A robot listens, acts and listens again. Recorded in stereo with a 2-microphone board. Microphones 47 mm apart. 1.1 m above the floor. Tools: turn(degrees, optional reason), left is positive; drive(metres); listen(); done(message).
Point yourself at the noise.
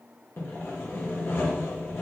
turn(degrees=60, reason="The sawing: about 60° left or 120° left.")
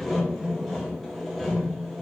done("Found it: sawing, straight ahead, 1 to 2 m away.")